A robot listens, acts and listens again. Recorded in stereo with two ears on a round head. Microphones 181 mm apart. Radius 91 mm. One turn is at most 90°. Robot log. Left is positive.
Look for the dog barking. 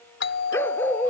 cmd yaw +30
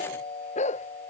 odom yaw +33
note: So it is at 145° left.
cmd yaw +90
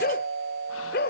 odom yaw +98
note: The dog barking is now 50° left.
cmd yaw +50
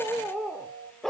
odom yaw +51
end: Found it: a dog barking, straight ahead.